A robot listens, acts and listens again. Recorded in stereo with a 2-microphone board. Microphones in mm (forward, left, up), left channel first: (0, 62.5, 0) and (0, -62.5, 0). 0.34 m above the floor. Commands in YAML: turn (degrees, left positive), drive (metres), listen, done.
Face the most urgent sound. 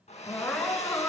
turn: 30
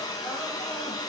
listen: true
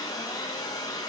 listen: true
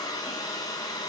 done: "I heard crying, but can't make it out now. It was about 20° right or 140° left."